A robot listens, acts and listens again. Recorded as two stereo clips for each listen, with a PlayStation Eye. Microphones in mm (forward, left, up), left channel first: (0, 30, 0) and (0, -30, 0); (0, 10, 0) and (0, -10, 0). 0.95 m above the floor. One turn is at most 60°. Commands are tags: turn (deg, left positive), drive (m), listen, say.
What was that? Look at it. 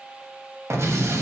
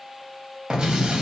<turn deg="-50"/>
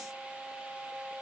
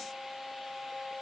<listen/>
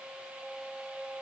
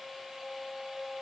<say>I heard an explosion, but can't make it out now. It was about straight ahead or 80° right.</say>